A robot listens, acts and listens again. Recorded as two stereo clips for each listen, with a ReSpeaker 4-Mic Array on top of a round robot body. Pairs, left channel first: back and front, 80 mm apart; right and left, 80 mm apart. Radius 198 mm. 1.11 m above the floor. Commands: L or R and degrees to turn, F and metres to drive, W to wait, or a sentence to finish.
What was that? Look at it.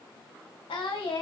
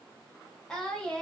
R165
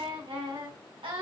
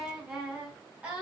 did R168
L15
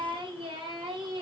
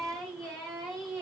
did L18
Facing the singing, 2 to 4 m away.